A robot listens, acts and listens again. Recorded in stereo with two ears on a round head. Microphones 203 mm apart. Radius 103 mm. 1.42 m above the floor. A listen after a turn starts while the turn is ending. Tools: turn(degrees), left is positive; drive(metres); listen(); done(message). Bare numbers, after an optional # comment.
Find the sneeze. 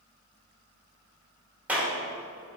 listen()
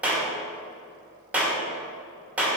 listen()
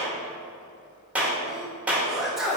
turn(30)
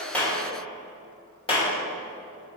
listen()
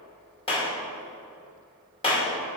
done("I heard a sneeze, but can't make it out now. It was about 30° right or 150° left.")